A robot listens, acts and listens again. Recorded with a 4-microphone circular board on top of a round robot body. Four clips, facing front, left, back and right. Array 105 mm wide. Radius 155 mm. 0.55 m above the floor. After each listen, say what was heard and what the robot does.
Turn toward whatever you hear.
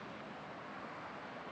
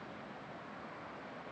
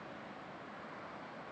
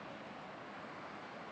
Keep listening.
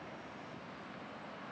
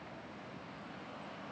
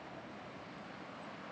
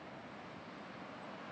Keep listening.
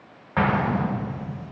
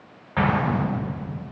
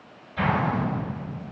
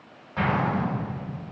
The explosion: 20° left. Turn 20° left.
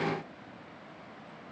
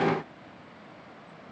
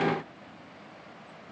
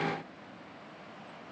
Facing where the explosion came from. I can't hear it now.